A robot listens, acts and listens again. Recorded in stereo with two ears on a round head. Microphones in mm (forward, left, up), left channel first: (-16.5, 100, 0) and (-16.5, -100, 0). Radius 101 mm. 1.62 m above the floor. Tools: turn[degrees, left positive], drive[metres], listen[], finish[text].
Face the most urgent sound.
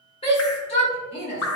Thought: The shout: about 25° left or 155° left.
Action: turn[25]
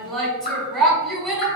Action: finish[Facing the shout.]